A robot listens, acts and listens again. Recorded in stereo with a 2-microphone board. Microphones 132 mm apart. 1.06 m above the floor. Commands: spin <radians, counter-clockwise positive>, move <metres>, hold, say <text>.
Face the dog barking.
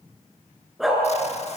spin 0.52
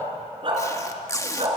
spin -0.79
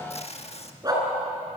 spin -0.52
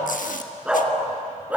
spin -0.17
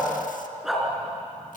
say Facing the dog barking, over 4 m away.